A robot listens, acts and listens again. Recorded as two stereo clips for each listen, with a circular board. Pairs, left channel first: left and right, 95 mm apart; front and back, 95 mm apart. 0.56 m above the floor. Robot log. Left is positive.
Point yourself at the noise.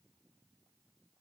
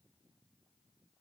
cmd idle
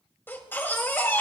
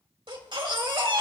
note: The baby crying: 155° left.
cmd yaw +155
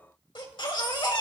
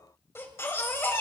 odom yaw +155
note: The baby crying is now 60° left.
cmd yaw +60
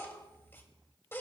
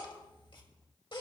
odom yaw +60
note: The baby crying is now 25° left.
cmd yaw +25
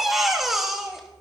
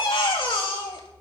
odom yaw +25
end: Facing the baby crying.